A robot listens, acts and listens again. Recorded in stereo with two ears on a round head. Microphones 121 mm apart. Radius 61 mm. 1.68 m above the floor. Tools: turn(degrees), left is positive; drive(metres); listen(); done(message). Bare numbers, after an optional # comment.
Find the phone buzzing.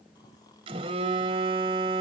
# The phone buzzing: about 40° right or 140° right.
turn(-40)
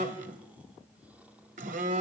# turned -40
# So it is at 90° right.
turn(-90)
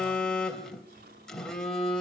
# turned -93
done("Facing the phone buzzing.")